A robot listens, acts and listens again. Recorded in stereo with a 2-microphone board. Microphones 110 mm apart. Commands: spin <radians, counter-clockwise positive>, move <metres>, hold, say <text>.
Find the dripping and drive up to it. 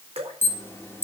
spin -1.31
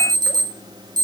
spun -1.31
hold
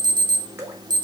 spin -0.44
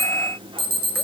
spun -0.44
hold
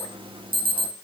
hold
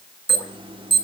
say I heard dripping from this way, but can't make it out now. I did not reach it.